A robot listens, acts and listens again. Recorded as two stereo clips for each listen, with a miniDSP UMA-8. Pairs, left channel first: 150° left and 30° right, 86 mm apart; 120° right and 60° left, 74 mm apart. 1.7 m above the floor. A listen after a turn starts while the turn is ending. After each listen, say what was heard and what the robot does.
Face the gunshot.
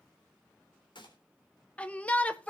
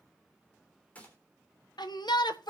The gunshot: 170° left. Turn 170° left.
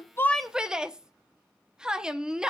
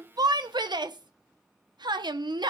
Facing where the gunshot came from. I can't hear it now.